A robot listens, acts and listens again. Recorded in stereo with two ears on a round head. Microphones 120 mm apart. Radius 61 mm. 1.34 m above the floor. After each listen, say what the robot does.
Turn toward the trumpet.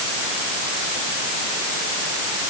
Keep listening.
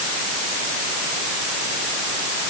Keep listening.
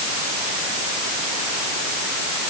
I can't make out a trumpet to turn to.